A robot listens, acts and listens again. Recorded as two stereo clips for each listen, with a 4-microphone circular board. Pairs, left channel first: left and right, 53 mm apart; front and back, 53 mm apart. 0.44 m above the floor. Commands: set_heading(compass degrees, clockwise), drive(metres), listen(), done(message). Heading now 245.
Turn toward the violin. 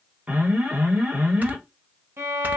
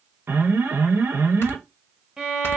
set_heading(350)
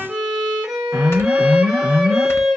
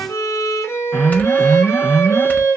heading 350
set_heading(5)
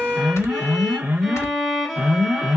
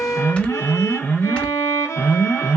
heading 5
done("Found it: a violin, straight ahead, under 1 m away.")